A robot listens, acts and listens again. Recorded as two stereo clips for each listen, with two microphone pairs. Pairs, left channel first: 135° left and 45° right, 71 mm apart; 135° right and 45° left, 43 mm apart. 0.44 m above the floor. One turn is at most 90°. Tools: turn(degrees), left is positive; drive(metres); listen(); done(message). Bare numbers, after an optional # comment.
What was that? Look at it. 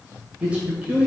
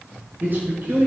# The man speaking: 25° left.
turn(25)
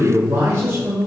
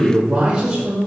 # The man speaking is now 15° right.
turn(-15)
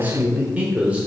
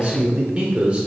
# The man speaking is now 10° left.
turn(10)
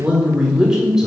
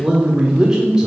# The man speaking is now 20° left.
turn(20)
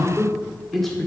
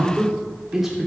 # The man speaking is now 75° left.
turn(75)
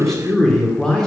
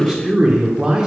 # The man speaking is now 75° left.
turn(75)
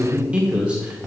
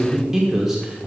# The man speaking is now 15° right.
turn(-15)
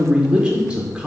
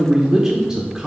done("Facing the man speaking.")